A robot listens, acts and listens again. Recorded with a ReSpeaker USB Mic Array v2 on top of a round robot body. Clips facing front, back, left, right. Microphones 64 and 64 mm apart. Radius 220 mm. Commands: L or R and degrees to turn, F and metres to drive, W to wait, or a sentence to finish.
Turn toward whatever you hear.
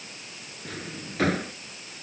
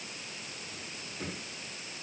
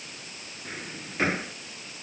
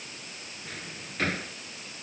L20
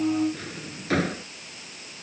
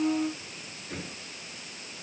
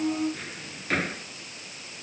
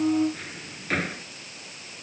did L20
Found it: a drawer, straight ahead.